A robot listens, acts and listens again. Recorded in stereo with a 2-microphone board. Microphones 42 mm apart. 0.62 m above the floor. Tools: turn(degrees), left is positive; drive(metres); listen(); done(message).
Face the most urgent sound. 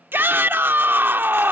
turn(degrees=-60)
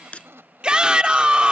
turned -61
turn(degrees=-25)
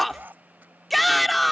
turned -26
done("Facing the shout.")